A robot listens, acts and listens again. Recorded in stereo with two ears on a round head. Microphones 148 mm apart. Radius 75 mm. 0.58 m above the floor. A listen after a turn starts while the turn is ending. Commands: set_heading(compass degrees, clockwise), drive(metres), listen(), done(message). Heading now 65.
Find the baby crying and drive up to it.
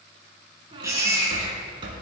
set_heading(80)
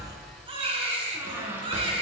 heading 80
set_heading(225)
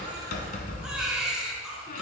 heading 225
drive(1.0)
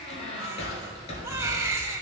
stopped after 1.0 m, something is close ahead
set_heading(245)
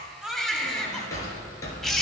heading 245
done("Arrived at the baby crying, straight ahead.")